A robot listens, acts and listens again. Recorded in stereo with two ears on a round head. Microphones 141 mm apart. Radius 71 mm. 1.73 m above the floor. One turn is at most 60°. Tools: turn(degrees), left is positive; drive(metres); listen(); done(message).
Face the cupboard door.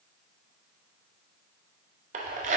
listen()
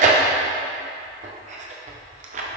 listen()
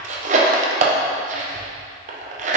done("I can't make out a cupboard door, only tearing paper.")